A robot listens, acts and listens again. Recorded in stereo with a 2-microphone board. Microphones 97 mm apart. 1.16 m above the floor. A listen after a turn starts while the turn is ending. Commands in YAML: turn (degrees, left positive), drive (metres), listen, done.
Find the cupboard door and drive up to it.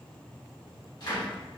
turn: 50
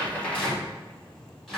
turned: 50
drive: 1.0
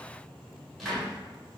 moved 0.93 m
drive: 1.0
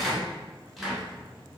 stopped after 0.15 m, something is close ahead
done: "Arrived at the cupboard door, straight ahead."